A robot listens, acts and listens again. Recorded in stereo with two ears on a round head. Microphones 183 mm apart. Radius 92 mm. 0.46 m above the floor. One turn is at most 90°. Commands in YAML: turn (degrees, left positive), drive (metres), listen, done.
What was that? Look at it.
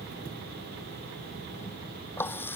turn: 30
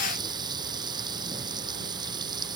turn: -20
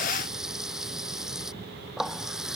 done: "Facing the running tap."